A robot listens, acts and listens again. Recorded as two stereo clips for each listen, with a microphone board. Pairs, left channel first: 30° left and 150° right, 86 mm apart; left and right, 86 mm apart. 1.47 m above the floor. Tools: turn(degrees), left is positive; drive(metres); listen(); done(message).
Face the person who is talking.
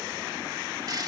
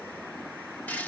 listen()
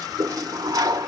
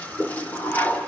listen()
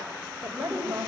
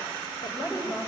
turn(degrees=125)
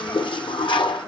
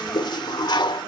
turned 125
listen()
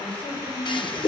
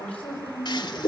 turn(degrees=15)
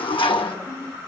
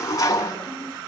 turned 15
listen()
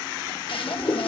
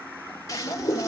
done("Facing the woman speaking.")